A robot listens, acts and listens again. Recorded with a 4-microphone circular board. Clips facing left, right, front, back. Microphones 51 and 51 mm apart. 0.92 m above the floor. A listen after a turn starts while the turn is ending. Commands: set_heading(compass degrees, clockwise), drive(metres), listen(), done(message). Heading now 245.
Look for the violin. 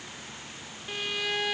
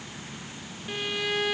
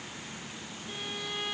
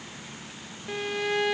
set_heading(60)
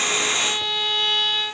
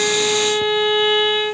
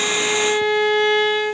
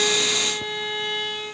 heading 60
set_heading(75)
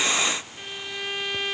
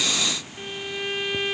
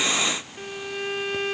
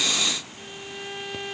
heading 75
done("Found it: a violin, straight ahead.")